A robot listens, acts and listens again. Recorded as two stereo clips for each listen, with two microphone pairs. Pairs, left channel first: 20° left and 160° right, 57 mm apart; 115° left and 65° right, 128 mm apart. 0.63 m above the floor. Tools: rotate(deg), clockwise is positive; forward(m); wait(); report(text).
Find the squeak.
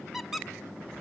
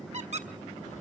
rotate(75)
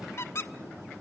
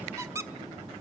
report("Found it: a squeak, straight ahead, 1 to 2 m away.")